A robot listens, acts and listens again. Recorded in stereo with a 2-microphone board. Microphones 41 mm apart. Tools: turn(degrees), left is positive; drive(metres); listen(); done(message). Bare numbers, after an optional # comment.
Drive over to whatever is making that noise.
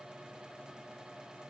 listen()
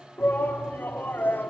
# The shout: about 55° left or 125° left.
turn(55)
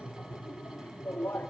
# So it is at 75° left.
turn(75)
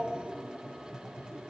# The shout is now 20° right.
turn(-20)
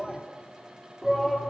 drive(1.0)
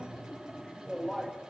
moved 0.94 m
drive(1.0)
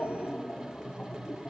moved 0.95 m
# The shout is now 15° left.
turn(15)
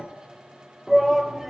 drive(1.0)
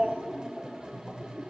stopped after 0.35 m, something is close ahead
# The shout is now 10° right.
turn(-10)
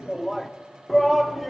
done("I am next to the shout.")